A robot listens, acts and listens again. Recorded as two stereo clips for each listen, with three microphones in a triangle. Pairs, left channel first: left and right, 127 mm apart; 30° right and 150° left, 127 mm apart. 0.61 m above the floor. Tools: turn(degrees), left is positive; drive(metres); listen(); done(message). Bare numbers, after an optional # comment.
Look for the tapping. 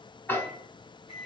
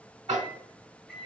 # The tapping: 160° left.
turn(160)
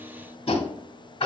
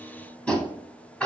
# The tapping is now 50° left.
turn(50)
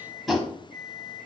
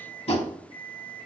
done("Facing the tapping.")